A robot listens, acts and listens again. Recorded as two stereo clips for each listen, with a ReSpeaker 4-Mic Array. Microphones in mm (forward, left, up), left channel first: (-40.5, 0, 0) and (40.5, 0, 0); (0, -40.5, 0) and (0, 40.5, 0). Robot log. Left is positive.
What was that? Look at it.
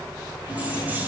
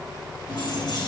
note: The keys jangling: 65° right.
cmd yaw -65
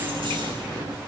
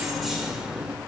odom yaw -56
end: Found it: keys jangling, straight ahead, 1 to 2 m away.